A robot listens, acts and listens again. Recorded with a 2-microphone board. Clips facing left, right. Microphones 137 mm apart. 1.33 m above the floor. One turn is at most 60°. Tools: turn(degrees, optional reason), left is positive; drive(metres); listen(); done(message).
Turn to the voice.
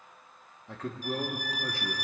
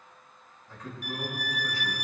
turn(degrees=60, reason="The man speaking: about 70° left or 110° left.")
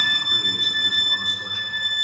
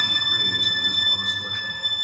listen()
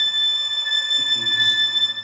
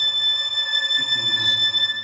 listen()
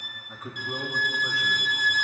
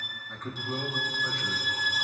done("Facing the man speaking, 1 to 2 m away.")